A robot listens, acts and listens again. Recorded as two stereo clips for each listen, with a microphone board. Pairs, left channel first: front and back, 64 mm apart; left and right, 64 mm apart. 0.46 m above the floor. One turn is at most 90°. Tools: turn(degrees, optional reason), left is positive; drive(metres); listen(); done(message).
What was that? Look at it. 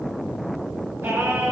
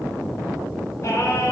turn(degrees=90, reason="The singing: 130° left.")
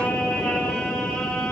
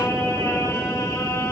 turn(degrees=75, reason="The singing is now 75° left.")
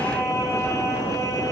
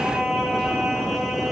done("Found it: singing, straight ahead, over 4 m away.")